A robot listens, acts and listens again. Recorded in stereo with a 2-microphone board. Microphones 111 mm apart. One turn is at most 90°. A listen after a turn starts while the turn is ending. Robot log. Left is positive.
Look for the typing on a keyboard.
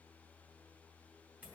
cmd idle
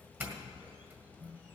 cmd idle
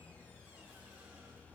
end: I can't make out typing on a keyboard to turn to.